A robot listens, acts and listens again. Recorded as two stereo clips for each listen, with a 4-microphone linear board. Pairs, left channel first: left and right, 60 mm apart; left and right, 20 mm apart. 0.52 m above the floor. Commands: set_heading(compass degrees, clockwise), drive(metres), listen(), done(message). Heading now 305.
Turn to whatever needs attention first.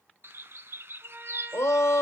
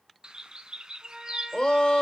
set_heading(250)
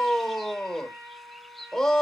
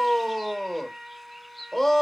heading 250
set_heading(240)
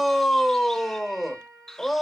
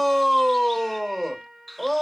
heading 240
done("Found it: a shout, straight ahead, 1 to 2 m away.")